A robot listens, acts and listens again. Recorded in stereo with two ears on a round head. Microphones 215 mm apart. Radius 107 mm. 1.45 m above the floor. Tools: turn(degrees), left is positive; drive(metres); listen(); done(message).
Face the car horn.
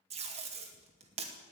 listen()
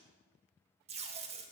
listen()
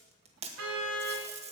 turn(degrees=-70)
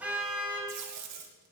done("Facing the car horn.")